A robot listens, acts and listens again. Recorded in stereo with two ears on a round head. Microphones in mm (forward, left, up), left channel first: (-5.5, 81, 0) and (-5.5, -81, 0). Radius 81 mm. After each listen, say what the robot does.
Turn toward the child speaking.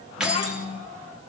Turn 40° left.
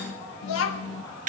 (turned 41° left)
Turn 100° left.
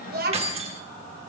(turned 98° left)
Turn 55° right.
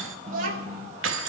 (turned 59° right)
Turn 50° right.
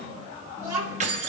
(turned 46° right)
Turn 10° right.
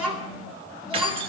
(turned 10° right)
Found it: a child speaking, straight ahead.